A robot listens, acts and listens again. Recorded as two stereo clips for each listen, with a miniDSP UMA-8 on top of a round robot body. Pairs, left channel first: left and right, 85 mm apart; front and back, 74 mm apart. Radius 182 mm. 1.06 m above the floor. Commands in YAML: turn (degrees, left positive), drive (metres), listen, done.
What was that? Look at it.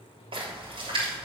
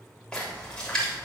turn: -80
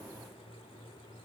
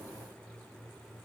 done: "Facing where the splash came from. I can't hear it now."